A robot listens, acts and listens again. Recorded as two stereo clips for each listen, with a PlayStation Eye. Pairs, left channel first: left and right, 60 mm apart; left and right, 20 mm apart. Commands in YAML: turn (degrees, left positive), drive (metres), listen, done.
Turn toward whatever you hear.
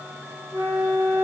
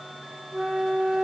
turn: -50
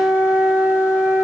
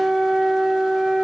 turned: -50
turn: -10
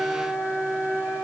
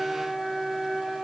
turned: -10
done: "Found it: a flute, straight ahead, under 1 m away."